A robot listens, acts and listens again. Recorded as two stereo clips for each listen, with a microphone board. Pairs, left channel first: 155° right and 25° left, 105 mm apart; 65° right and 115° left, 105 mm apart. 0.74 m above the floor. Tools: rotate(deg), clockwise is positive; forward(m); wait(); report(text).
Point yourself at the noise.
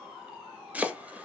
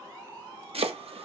rotate(-95)
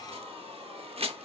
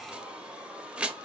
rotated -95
rotate(-35)
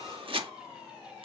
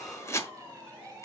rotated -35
report("Found it: chopping, straight ahead.")